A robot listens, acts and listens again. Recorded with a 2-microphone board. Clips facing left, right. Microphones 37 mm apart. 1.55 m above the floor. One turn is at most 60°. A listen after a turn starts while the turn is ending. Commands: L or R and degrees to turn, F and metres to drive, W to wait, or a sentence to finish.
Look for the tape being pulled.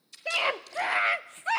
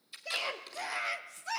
R20
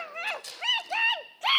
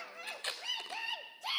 R60
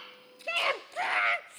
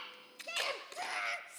R60
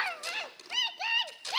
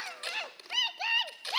R15
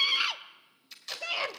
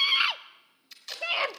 Found it: tape being pulled, straight ahead.